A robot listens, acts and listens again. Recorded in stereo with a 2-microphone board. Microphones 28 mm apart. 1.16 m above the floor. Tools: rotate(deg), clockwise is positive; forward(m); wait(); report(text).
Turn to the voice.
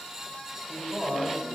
rotate(45)
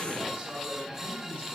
rotate(105)
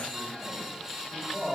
rotate(25)
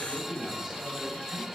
rotate(-15)
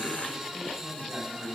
report("Facing the man speaking.")